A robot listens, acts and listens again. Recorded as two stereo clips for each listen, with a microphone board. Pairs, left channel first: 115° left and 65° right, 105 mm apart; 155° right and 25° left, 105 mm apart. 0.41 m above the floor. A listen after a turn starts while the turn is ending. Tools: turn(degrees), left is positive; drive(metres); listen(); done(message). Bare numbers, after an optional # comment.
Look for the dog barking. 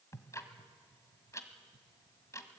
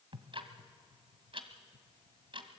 listen()
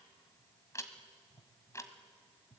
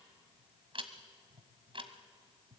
listen()
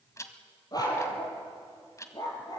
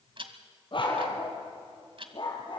# The dog barking: 165° left.
turn(165)
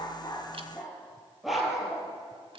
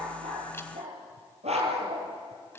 # The dog barking is now 20° left.
turn(20)
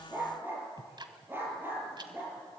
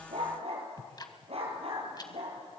done("Facing the dog barking, over 4 m away.")